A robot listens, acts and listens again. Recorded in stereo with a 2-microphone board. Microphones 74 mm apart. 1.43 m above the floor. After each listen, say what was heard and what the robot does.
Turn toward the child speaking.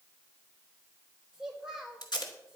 Turn 30° right.
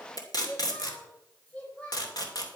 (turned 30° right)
So it is at 20° left. Turn 20° left.
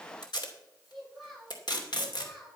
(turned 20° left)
Found it: a child speaking, straight ahead, over 4 m away.